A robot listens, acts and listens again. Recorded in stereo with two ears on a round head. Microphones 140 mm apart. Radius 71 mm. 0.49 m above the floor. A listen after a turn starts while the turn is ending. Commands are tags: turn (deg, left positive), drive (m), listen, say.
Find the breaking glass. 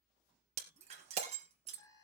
<turn deg="-50"/>
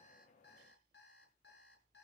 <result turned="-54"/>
<listen/>
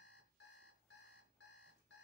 <say>I heard breaking glass, but can't make it out now. It was about 5° left or 75° right.</say>